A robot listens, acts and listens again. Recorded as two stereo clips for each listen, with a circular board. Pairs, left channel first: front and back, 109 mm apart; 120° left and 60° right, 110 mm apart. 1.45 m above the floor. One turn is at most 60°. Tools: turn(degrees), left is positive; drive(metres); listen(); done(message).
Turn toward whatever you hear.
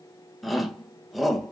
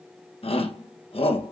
turn(degrees=60)
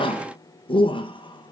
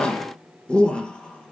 turn(degrees=40)
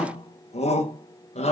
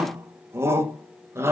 done("Facing the shout.")